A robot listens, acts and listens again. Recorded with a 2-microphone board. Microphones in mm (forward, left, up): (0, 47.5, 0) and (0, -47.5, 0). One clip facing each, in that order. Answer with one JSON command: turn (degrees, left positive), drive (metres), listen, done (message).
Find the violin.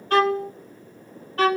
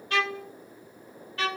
{"turn": 45}
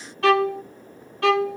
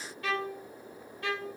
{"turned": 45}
{"turn": 95}
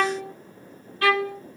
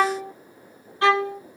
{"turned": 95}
{"turn": -25}
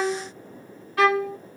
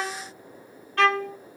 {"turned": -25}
{"done": "Found it: a violin, straight ahead."}